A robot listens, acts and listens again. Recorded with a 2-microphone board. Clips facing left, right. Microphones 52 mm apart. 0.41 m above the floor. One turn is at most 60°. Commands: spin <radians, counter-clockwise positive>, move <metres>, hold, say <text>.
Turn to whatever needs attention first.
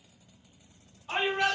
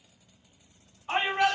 spin -0.44
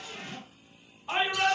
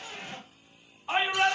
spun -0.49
say Facing the shout, 1 to 2 m away.